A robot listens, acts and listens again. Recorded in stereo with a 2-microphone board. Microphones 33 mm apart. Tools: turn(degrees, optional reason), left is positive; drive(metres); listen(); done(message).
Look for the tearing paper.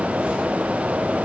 listen()
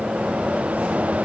listen()
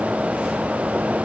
done("I can't make out tearing paper to turn to.")